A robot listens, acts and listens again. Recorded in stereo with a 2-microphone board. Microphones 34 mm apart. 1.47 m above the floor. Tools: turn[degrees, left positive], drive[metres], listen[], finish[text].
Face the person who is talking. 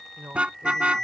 Action: turn[-90]
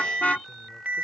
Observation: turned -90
Action: listen[]
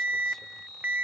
Action: listen[]
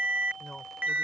Thought: The man speaking is now 15° left.
Action: turn[15]
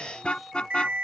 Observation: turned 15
Action: listen[]
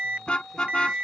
Action: listen[]
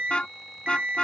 Action: finish[Facing where the man speaking came from. I can't hear it now.]